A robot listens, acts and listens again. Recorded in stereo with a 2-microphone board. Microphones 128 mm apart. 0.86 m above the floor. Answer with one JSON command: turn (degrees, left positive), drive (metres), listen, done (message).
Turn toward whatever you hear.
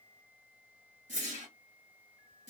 {"turn": -75}
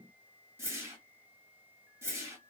{"turn": -20}
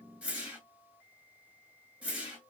{"turn": -10}
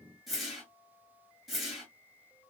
{"done": "Facing the whoosh."}